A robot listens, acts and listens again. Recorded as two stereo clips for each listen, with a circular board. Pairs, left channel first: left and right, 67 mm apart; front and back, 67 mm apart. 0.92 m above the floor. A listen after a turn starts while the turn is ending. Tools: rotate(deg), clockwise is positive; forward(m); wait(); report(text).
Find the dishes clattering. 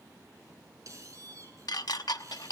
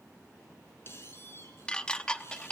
rotate(-75)
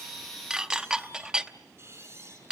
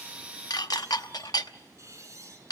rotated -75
rotate(10)
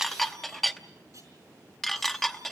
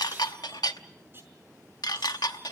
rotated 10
report("Found it: dishes clattering, straight ahead.")